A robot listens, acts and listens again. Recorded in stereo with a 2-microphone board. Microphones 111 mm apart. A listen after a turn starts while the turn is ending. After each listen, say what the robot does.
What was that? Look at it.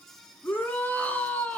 Turn 15° left.
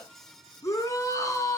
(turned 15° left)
Turn 150° left.
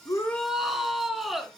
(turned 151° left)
Facing the shout, 2 to 4 m away.